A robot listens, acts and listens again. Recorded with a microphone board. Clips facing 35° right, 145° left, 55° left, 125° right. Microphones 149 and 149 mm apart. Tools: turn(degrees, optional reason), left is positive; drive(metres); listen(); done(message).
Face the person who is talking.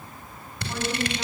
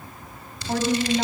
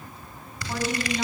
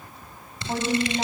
turn(degrees=180, reason="The woman speaking: straight behind.")
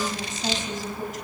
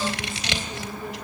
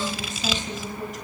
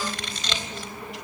turn(degrees=10, reason="The woman speaking is now 10° left.")
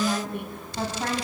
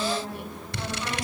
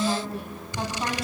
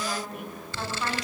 done("Found it: a woman speaking, straight ahead.")